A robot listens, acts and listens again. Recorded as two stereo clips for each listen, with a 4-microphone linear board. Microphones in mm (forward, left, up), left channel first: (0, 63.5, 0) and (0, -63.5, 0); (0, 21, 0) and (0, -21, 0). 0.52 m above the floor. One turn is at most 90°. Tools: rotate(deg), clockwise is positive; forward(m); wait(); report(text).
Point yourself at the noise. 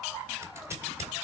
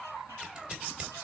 rotate(20)
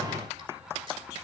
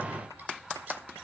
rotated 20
wait()
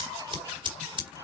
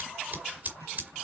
rotate(90)
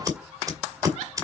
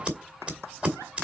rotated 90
rotate(30)
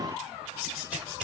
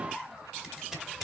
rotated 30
rotate(15)
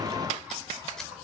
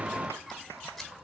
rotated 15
wait()
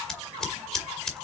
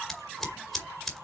report("Facing the scissors.")